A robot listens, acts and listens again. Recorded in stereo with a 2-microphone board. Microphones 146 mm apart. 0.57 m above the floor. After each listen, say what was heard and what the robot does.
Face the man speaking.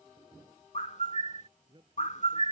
The man speaking: about 30° right or 150° right. Turn 30° right.
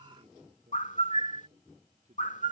So it is at 125° right. Turn 125° right.
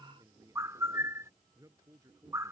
The man speaking is now 25° right. Turn 25° right.
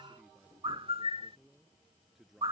Facing the man speaking.